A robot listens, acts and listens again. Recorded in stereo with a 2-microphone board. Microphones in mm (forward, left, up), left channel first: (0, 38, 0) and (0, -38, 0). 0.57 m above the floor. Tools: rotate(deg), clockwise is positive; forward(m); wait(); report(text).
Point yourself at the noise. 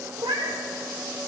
rotate(90)
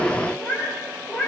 report("Found it: a cat meowing, straight ahead, over 4 m away.")